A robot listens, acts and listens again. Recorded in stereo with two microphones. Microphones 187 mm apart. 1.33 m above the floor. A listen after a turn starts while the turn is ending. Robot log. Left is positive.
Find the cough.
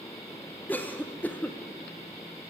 cmd yaw +30
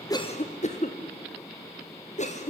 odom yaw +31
note: So it is at 140° left.
cmd yaw +140
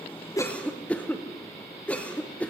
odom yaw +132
end: Found it: a cough, straight ahead, 1 to 2 m away.